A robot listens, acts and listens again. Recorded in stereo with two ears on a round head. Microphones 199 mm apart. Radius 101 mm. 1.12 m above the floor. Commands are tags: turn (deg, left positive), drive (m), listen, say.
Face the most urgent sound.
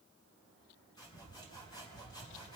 <listen/>
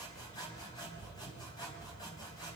<listen/>
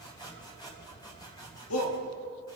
<turn deg="65"/>
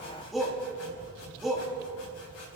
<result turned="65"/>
<say>Found it: a shout, straight ahead, 2 to 4 m away.</say>